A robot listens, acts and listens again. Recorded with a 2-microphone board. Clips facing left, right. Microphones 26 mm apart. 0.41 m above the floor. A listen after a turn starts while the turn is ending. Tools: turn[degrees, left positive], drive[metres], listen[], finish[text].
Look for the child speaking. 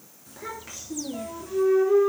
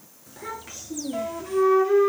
Action: turn[30]
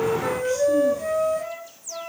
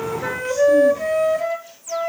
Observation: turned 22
Action: listen[]
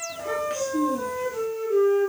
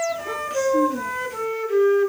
Action: turn[30]
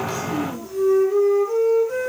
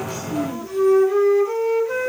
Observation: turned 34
Thought: So it is at 15° right.
Action: turn[-15]
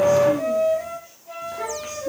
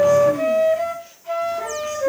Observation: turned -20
Action: listen[]
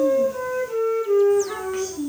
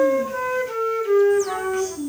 Action: finish[Facing the child speaking.]